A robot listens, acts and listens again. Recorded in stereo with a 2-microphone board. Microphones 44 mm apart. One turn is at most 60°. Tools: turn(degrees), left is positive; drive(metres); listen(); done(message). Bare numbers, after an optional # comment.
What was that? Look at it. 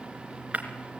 # The breaking glass: about 35° right or 145° right.
turn(-35)
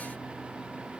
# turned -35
listen()
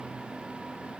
done("I heard breaking glass, but can't make it out now. It was about straight ahead or 110° right.")